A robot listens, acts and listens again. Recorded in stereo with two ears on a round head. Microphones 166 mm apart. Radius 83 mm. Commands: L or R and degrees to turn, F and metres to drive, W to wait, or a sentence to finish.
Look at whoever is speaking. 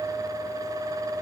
W
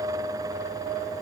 W
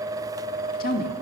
L50
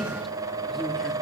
W
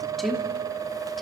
Found it: a woman speaking, straight ahead.